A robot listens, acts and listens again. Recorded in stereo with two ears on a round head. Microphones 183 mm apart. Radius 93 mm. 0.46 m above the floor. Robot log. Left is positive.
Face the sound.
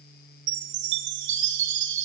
note: The chime: about 60° right or 120° right.
cmd yaw -60
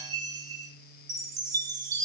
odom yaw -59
note: So it is at 20° right.
cmd yaw -20
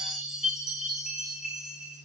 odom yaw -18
end: Found it: a chime, straight ahead.